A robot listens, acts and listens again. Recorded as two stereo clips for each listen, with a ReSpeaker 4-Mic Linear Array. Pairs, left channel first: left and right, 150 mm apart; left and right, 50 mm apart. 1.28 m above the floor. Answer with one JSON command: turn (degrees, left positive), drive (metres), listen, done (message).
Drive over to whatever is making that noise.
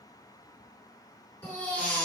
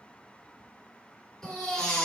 {"turn": 30}
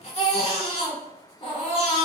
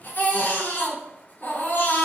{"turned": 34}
{"turn": 135}
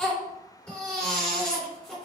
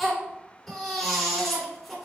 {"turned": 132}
{"drive": 1.0}
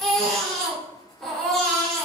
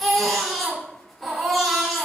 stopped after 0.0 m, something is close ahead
{"done": "Blocked. The baby crying is further on, straight ahead."}